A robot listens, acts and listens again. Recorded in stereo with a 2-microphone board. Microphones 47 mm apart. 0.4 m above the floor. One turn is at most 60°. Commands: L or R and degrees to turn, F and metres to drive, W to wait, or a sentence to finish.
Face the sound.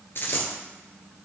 L50
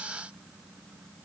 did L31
W
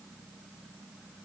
I heard a dropped coin, but can't make it out now. It was about 20° left or 95° left.